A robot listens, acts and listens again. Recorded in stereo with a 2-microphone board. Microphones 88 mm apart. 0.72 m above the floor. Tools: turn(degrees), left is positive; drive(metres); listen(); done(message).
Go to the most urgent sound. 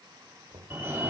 turn(degrees=-25)
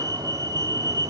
turn(degrees=-125)
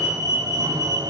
turn(degrees=-45)
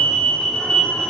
turn(degrees=10)
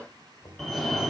drive(metres=1.0)
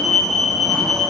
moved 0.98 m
drive(metres=1.0)
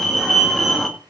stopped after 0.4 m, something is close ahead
done("I am next to the fire alarm.")